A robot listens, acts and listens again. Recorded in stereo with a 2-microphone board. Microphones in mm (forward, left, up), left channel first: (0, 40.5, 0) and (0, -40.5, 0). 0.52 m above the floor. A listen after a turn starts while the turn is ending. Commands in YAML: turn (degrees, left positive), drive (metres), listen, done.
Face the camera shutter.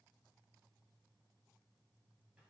listen: true
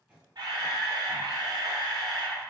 turn: -60
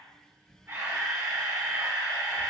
turn: -40
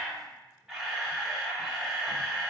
done: "Facing the camera shutter."